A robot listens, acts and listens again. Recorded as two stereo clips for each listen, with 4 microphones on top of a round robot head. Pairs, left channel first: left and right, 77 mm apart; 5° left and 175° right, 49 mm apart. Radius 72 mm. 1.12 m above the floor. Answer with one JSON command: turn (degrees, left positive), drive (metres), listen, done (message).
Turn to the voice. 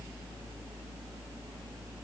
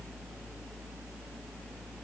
{"listen": true}
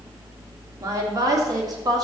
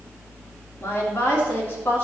{"turn": -50}
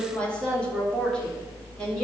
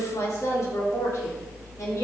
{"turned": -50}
{"turn": 10}
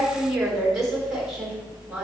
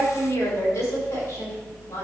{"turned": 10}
{"done": "Facing the woman speaking."}